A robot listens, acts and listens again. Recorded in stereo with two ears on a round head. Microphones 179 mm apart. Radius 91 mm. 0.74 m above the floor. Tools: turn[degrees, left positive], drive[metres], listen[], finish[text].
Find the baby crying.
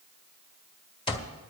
Action: listen[]
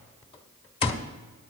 Action: listen[]
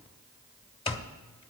Action: finish[I can't make out a baby crying to turn to.]